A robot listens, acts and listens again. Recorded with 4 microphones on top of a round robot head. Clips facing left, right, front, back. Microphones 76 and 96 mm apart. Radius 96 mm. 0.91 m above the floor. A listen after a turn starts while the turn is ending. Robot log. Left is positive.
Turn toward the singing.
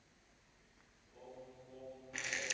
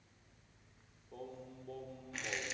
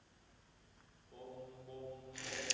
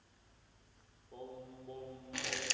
note: The singing: 115° right.
cmd yaw -115
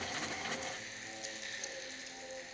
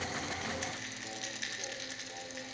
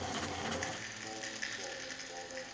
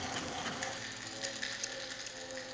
cmd idle
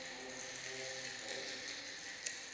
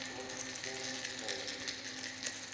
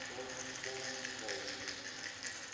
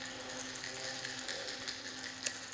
cmd idle
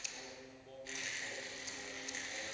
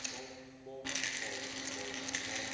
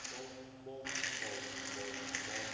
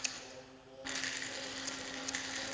note: The singing is now 30° right.
cmd yaw -30
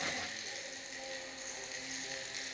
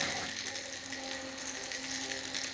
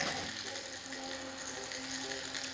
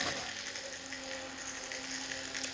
cmd idle
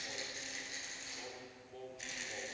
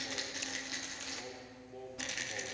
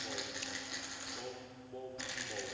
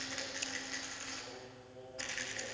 note: The singing is now 10° right.
cmd yaw -10
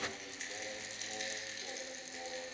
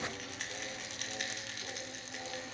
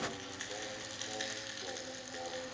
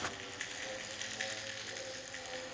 cmd idle
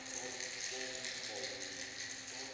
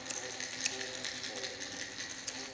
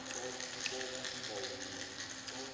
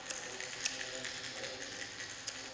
cmd idle
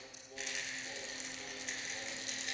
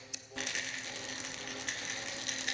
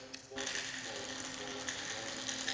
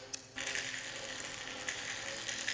end: Facing the singing, 2 to 4 m away.